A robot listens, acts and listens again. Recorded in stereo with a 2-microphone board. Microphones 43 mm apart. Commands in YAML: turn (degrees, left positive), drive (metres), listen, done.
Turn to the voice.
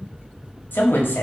turn: 65
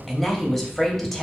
turn: 10
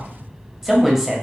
done: "Found it: a woman speaking, straight ahead, 1 to 2 m away."